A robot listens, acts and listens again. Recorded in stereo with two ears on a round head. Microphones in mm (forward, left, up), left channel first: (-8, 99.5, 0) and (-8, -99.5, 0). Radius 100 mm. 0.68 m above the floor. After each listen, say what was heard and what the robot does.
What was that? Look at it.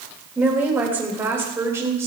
Turn 30° right.
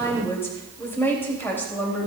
So it is at 10° left. Turn 10° left.
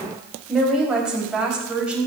Facing the woman speaking, over 4 m away.